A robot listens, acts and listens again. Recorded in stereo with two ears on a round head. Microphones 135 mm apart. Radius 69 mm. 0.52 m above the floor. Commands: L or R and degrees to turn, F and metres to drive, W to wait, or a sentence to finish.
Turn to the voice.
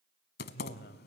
L70
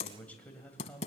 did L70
L10
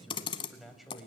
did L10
Found it: a man speaking, straight ahead.